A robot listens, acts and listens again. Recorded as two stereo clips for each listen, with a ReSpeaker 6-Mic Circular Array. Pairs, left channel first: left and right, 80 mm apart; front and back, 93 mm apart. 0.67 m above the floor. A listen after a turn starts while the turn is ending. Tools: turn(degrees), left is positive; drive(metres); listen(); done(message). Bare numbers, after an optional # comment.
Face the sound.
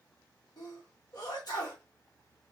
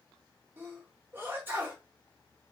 # The sneeze: 115° left.
turn(115)
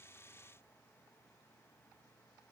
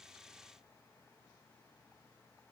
done("I heard a sneeze from this way, but can't make it out now.")